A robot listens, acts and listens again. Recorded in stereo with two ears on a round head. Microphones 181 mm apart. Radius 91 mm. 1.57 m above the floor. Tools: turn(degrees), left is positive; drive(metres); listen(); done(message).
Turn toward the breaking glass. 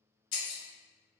turn(degrees=45)
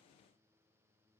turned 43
listen()
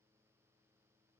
done("I heard breaking glass, but can't make it out now. It was about straight ahead or 95° left.")